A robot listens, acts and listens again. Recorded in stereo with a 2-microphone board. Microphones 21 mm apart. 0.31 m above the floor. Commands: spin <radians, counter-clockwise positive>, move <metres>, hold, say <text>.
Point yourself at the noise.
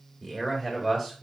spin 0.52
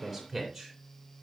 say Facing the man speaking, 2 to 4 m away.